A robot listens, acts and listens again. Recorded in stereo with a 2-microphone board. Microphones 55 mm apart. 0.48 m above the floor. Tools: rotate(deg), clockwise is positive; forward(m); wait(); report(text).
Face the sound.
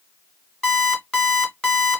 rotate(-20)
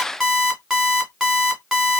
report("Facing the alarm clock.")